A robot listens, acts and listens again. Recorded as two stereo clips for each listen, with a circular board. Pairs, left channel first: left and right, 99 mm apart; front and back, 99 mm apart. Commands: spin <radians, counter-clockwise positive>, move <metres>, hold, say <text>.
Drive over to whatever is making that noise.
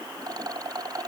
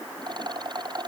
spin -2.44
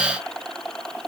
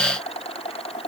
move 1.0
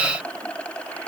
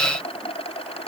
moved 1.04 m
spin 0.26
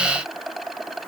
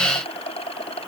move 1.0
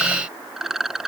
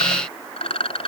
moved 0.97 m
move 1.0
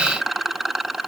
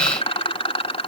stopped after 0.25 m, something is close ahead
say Arrived at the rattle, straight ahead.